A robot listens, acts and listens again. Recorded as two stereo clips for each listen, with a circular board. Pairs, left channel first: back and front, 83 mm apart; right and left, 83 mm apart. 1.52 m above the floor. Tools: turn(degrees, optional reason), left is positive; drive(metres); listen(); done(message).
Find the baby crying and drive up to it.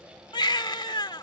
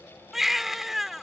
turn(degrees=175, reason="The baby crying: 175° left.")
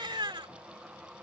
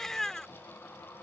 drive(metres=1.0)
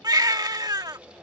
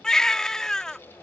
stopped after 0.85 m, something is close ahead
turn(degrees=-10, reason="The baby crying is now 10° right.")
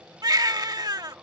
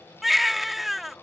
done("I am next to the baby crying.")